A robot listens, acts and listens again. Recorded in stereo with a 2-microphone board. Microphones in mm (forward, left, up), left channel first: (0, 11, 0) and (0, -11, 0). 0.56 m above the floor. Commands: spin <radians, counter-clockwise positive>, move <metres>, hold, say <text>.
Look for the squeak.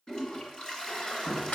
spin 1.31
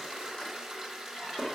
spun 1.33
hold
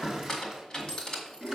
spin 0.52
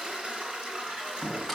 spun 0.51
say Found it: a squeak, straight ahead, 2 to 4 m away.